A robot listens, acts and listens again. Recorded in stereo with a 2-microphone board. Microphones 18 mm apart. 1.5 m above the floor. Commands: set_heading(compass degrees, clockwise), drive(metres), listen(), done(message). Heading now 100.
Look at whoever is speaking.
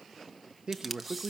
set_heading(160)
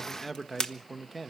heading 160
done("Found it: a man speaking, straight ahead.")